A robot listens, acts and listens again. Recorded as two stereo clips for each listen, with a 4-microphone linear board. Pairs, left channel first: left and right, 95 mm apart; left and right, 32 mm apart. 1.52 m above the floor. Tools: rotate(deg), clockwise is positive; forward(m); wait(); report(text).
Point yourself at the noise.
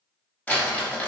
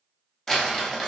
rotate(-30)
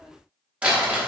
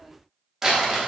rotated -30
rotate(15)
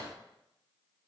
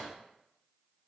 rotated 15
wait()
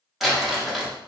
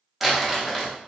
report("Found it: crumpling, straight ahead.")